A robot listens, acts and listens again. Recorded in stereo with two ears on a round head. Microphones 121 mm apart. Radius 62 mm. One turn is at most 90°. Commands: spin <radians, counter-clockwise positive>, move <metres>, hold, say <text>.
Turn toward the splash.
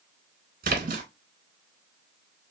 spin -1.22
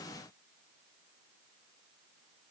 hold
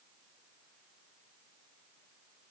say I heard a splash, but can't make it out now. It was about straight ahead or 40° right.